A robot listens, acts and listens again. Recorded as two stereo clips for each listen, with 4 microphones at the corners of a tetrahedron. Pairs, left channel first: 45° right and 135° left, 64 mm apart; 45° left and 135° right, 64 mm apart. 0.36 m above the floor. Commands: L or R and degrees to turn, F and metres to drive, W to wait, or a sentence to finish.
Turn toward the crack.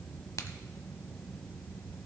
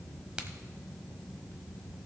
R65
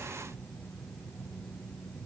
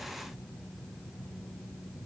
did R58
I heard a crack from this way, but can't make it out now.